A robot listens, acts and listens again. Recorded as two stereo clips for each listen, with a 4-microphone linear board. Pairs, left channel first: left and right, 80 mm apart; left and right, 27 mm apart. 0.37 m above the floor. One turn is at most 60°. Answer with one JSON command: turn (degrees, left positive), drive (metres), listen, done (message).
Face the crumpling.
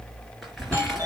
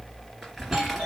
{"turn": 30}
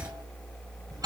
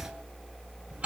{"listen": true}
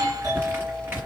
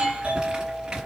{"turn": -30}
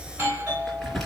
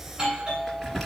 {"done": "Found it: crumpling, straight ahead."}